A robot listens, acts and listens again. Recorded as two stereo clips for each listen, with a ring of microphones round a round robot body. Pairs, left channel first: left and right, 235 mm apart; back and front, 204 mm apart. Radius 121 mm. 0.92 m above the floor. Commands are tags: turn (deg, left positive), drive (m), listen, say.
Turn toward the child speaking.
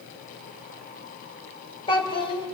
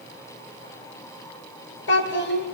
<turn deg="160"/>
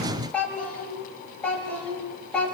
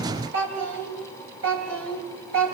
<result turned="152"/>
<say>Facing the child speaking, over 4 m away.</say>